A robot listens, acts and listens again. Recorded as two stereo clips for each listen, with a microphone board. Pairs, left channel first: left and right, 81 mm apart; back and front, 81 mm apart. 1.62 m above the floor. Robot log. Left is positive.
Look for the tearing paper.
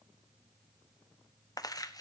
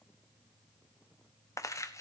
note: The tearing paper: 130° left.
cmd yaw +130
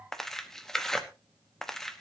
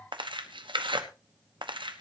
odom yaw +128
end: Facing the tearing paper.